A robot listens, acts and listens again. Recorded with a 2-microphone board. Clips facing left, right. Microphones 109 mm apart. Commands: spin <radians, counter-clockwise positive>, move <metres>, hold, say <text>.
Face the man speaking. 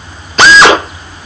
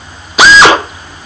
hold
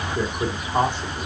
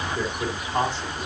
spin 0.26
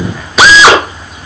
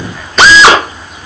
hold
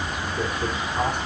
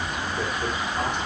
spin 0.52
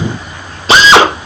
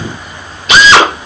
hold
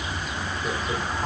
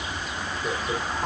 spin -0.17
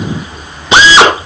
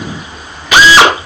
hold
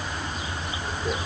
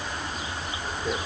hold
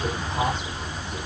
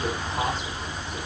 say Facing the man speaking.